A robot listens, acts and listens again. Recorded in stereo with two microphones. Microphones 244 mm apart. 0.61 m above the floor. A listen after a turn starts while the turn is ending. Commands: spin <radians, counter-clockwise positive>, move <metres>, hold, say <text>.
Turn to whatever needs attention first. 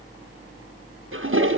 hold
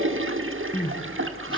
spin 0.35
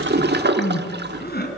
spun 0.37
spin 2.44
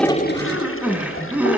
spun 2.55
say Found it: crying, straight ahead.